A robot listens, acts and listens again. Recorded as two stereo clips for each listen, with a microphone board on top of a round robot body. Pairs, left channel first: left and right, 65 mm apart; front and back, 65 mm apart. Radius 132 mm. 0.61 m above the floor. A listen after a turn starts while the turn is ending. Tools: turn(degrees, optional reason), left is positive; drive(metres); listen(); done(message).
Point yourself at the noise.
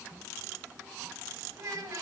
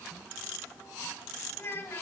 turn(degrees=-55, reason="The child speaking: 55° right.")
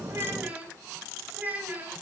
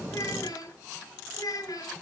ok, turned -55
turn(degrees=-25, reason="The child speaking is now 25° right.")
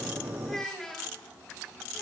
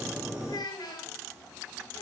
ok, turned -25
done("Facing the child speaking.")